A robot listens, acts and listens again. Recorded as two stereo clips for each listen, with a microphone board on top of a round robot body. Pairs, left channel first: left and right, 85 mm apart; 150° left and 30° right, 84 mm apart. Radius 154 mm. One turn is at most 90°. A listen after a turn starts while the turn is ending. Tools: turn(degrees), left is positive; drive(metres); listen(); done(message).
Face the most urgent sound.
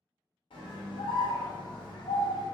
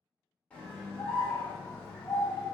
turn(degrees=75)
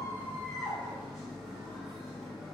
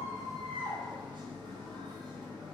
done("Found it: a scream, straight ahead, 1 to 2 m away.")